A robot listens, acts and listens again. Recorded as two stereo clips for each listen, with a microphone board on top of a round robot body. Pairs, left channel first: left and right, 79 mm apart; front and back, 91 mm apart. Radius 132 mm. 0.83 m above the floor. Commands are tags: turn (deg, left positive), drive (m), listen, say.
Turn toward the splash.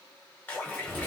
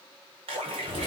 <turn deg="165"/>
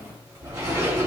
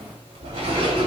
<say>I heard a splash from this way, but can't make it out now.</say>